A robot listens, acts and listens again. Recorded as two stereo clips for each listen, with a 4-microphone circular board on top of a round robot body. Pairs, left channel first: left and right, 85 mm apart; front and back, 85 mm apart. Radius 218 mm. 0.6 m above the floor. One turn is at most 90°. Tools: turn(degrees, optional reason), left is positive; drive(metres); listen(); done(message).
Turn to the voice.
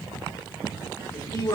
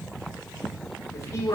turn(degrees=50, reason="The man speaking: 50° left.")
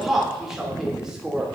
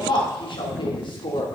turn(degrees=-10, reason="The man speaking is now 10° right.")
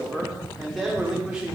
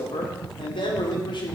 turn(degrees=-10, reason="The man speaking is now 10° right.")
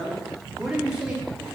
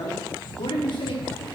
turn(degrees=-10, reason="The man speaking is now 10° right.")
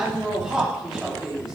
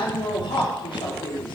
done("Found it: a man speaking, straight ahead.")